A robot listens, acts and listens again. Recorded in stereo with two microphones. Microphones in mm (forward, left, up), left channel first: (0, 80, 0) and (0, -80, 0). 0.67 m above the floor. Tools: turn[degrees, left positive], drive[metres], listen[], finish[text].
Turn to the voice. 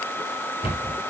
Action: listen[]
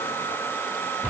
Action: listen[]
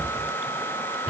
Action: finish[I can't make out anyone speaking to turn to.]